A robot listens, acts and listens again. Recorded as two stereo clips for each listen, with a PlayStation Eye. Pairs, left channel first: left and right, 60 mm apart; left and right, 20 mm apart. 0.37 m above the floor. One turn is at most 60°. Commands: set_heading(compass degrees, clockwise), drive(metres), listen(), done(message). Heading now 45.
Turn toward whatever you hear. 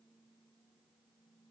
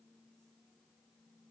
listen()
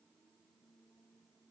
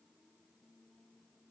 listen()
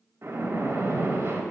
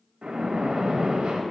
set_heading(90)
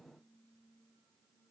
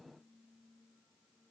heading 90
listen()
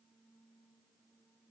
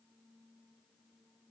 done("I heard a splash, but can't make it out now. It was about straight ahead or 90° right.")